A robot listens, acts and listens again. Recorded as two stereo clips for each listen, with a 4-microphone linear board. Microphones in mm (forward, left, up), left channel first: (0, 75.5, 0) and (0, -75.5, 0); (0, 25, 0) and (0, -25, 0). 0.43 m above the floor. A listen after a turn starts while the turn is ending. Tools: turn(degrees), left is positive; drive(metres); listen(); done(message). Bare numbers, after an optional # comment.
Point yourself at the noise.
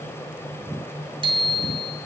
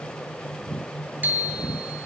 # The bicycle bell: about 35° right or 145° right.
turn(-35)
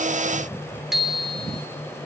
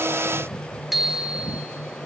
done("Facing the bicycle bell.")